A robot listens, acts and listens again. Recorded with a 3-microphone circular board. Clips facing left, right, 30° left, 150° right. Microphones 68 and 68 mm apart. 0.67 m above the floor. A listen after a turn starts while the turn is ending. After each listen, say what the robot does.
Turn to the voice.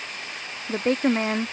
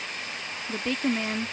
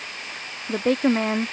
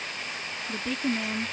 Turn 45° left.
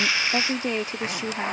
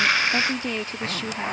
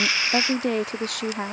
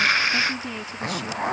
Turn 20° left.
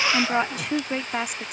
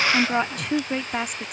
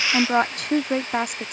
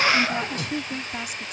Found it: a woman speaking, straight ahead.